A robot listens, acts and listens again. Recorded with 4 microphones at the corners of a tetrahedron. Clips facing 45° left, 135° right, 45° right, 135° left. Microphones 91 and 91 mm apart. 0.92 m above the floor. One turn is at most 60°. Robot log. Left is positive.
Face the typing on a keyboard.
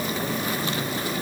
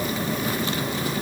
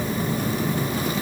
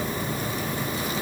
cmd idle
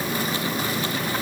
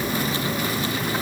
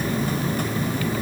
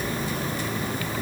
cmd idle
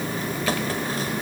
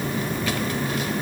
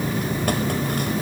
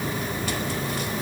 end: I can't make out typing on a keyboard to turn to.